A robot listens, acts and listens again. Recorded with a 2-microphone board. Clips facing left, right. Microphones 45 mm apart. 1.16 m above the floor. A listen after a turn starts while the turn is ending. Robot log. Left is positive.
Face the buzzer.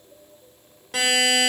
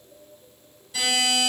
cmd yaw +90
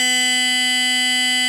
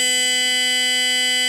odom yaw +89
end: Found it: a buzzer, straight ahead.